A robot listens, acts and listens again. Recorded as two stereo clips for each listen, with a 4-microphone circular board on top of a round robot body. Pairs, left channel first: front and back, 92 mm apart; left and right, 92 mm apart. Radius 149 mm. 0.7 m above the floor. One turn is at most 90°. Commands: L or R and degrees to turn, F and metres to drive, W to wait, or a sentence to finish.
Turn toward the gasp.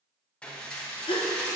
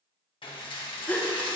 L15
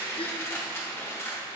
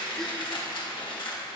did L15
Facing where the gasp came from. I can't hear it now.